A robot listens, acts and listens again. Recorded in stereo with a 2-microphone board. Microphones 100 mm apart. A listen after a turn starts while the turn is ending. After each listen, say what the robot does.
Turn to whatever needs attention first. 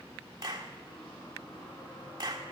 Keep listening.
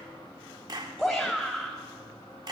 Turn 30° left.
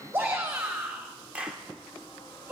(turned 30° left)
Turn 25° right.
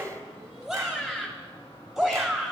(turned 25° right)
Found it: a shout, straight ahead.